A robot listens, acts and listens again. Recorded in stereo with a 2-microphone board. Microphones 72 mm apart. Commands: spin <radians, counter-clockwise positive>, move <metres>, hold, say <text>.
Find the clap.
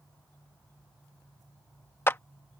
spin 0.52
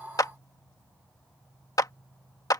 spin 2.01
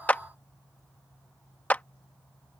spin 0.44
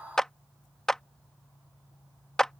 spin 0.17
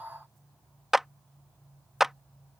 say Found it: a clap, straight ahead.